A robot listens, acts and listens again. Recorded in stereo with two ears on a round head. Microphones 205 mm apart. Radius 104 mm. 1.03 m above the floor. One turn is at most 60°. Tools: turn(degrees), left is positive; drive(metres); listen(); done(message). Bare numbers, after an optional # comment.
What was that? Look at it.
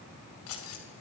# The keys jangling: about 70° left or 110° left.
turn(60)
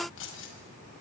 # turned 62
# So it is at 55° left.
turn(55)
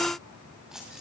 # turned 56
done("Facing the keys jangling.")